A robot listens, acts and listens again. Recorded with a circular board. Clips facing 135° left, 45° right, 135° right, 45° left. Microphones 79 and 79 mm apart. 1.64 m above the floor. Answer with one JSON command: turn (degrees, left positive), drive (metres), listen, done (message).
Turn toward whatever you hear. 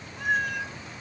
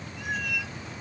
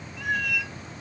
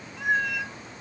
{"turn": 100}
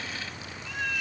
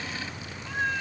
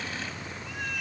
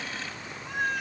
{"turn": 10}
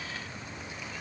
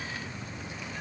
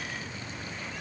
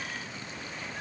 {"listen": true}
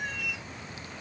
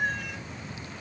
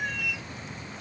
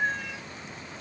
{"turn": -10}
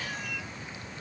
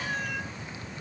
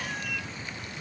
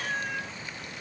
{"done": "Found it: a cat meowing, straight ahead."}